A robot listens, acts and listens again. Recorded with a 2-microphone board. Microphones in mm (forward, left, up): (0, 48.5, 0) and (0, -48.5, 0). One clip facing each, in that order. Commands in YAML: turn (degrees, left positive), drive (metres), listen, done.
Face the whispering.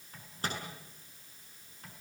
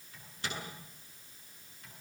listen: true
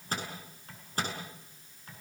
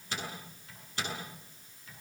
listen: true
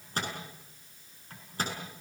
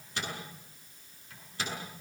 done: "I can't make out whispering, only a microwave."